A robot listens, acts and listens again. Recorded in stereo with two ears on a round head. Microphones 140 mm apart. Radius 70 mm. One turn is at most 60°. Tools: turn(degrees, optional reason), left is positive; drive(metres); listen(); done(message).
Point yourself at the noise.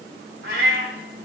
turn(degrees=-60, reason="The cat meowing: about 70° right or 110° right.")
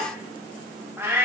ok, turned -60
turn(degrees=-15, reason="So it is at 15° right.")
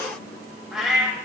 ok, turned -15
done("Found it: a cat meowing, straight ahead.")